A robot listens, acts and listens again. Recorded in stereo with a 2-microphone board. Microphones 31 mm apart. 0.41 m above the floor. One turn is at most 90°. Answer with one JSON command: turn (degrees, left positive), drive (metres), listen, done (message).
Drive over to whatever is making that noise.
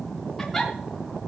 {"turn": 30}
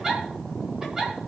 {"turn": -20}
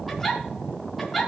{"drive": 1.0}
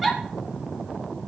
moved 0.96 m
{"drive": 1.0}
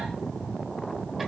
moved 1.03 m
{"listen": true}
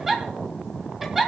{"turn": -10}
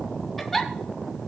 {"drive": 1.0}
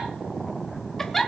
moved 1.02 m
{"turn": 10}
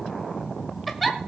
{"drive": 1.0}
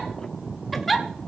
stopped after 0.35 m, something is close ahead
{"done": "I am next to the giggle."}